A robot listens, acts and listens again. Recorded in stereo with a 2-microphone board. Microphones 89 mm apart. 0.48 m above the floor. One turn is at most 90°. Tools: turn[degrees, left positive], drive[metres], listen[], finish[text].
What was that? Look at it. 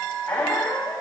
Thought: The squeak: about 20° left or 160° left.
Action: turn[20]
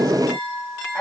Action: listen[]
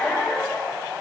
Action: finish[Found it: a squeak, straight ahead.]